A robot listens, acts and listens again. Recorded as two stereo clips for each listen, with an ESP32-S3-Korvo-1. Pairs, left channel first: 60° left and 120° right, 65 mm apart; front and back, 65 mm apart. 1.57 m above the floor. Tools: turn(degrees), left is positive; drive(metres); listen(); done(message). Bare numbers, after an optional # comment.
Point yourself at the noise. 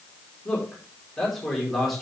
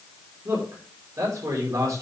# The man speaking: 145° left.
turn(145)
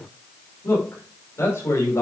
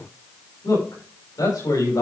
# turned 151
# The man speaking is now 15° left.
turn(15)
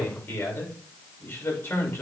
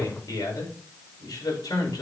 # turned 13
done("Facing the man speaking, over 4 m away.")